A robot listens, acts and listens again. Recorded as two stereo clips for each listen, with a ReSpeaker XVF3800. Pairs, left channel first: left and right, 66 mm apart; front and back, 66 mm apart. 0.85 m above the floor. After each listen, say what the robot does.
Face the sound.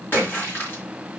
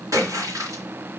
Turn 145° left.
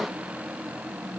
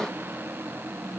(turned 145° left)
Facing where the splash came from. I can't hear it now.